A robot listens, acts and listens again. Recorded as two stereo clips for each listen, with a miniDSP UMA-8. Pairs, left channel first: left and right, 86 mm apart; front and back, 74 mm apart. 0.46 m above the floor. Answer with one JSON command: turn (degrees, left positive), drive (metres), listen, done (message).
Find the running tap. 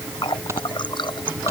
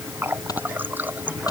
{"turn": 115}
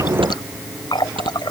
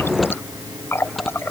{"turn": 55}
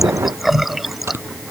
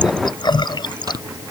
{"done": "Facing the running tap."}